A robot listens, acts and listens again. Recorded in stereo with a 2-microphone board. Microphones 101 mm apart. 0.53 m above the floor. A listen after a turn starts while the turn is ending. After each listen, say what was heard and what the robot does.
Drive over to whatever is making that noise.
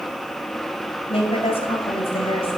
The woman speaking: about 65° left or 115° left. Turn 65° left.
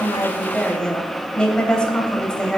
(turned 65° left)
So it is at 10° left. Turn 10° left.
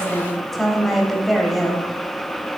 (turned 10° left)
Drive 1.0 m forward.
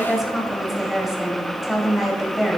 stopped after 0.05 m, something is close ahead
Something is in my way. I am facing the woman speaking but have not reached it.